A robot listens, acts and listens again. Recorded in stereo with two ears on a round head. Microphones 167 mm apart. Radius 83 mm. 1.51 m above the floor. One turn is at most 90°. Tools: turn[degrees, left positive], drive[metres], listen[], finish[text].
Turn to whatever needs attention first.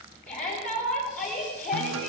Thought: The shout: about 50° left or 130° left.
Action: turn[50]
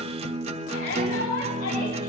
Thought: So it is at 80° left.
Action: turn[80]
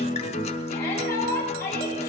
Thought: The shout is now 15° left.
Action: turn[15]
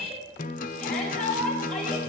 Action: finish[Facing the shout, over 4 m away.]